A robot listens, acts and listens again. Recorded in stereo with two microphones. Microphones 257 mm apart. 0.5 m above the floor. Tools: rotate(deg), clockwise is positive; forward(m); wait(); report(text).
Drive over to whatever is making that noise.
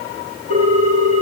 rotate(90)
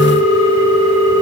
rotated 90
rotate(15)
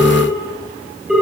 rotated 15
forward(1.0)
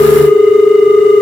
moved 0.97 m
forward(1.0)
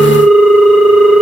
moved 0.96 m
forward(1.0)
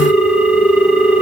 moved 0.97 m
forward(1.0)
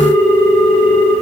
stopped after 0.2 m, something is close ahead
report("I am next to the ringtone.")